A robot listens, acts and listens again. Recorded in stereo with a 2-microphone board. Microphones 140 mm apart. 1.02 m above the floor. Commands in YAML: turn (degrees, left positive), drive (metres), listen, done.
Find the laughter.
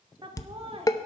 turn: -45
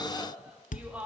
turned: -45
turn: -10
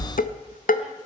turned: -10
listen: true
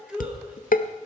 done: "Facing the laughter, 2 to 4 m away."